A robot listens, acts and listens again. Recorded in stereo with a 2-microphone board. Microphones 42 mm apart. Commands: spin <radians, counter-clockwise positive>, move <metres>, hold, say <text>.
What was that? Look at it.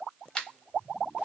spin 0.26
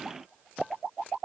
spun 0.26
hold
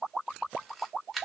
say Found it: a camera shutter, straight ahead, under 1 m away.